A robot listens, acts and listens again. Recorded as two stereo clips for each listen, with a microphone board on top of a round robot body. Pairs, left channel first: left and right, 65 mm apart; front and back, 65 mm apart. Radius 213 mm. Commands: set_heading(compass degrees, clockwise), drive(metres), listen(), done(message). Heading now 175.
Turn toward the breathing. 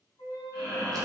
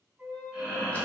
set_heading(275)
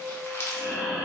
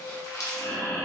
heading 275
done("Found it: breathing, straight ahead.")